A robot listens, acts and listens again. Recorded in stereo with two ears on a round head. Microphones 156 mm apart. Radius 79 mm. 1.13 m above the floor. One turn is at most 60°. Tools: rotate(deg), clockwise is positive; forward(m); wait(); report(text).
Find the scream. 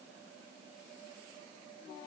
wait()
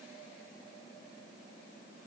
wait()
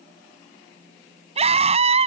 rotate(35)
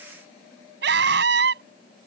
rotate(60)
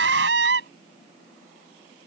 rotate(60)
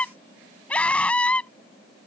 report("Found it: a scream, straight ahead.")